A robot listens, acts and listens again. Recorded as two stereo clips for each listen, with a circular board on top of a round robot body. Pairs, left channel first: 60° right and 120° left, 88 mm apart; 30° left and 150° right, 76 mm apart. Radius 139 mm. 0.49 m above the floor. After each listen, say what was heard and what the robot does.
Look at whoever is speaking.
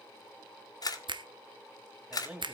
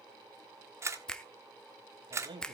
The man speaking: 165° right. Turn 165° right.
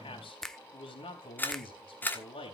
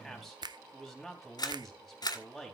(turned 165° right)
The man speaking is now 60° right. Turn 60° right.
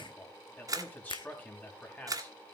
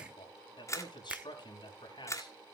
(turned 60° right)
The man speaking is now 10° left. Turn 10° left.
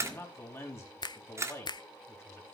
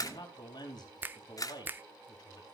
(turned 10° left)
Facing the man speaking, 2 to 4 m away.